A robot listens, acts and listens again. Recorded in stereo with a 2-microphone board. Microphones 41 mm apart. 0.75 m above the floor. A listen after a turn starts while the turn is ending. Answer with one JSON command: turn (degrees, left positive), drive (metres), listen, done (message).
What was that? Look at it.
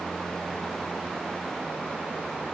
{"listen": true}
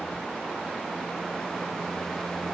{"listen": true}
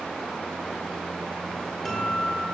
{"turn": 30}
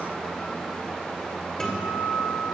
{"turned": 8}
{"turn": 30}
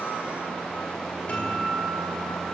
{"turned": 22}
{"turn": 145}
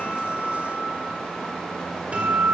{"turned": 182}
{"turn": -35}
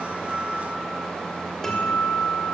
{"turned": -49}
{"turn": 15}
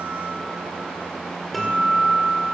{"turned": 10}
{"done": "Facing the guitar, 2 to 4 m away."}